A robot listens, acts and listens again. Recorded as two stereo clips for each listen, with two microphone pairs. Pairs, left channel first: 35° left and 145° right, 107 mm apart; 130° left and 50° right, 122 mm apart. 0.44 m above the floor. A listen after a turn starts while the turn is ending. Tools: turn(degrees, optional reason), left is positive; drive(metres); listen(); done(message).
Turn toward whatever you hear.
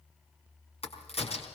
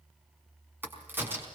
turn(degrees=20, reason="The crack: 20° left.")
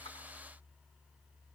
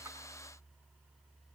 done("I heard a crack from this way, but can't make it out now.")